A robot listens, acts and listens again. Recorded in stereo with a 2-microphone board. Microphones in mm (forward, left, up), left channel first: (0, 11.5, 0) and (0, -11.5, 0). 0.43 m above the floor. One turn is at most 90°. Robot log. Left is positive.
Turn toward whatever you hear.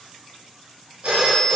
note: The phone ringing: about 50° right or 130° right.
cmd yaw -50
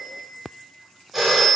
end: Facing the phone ringing, 1 to 2 m away.